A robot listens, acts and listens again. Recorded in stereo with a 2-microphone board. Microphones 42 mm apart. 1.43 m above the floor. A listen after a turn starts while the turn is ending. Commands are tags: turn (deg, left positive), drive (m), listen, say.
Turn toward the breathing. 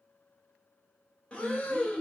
<turn deg="25"/>
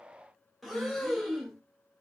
<say>Facing the breathing, under 1 m away.</say>